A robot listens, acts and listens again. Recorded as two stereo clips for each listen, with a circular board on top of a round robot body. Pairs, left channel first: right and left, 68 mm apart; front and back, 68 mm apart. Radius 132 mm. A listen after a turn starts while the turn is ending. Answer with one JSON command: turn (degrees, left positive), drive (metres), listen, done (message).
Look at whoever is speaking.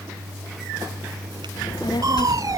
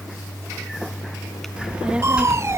{"turn": -105}
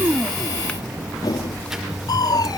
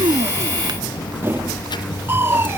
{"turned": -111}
{"done": "Facing the child speaking."}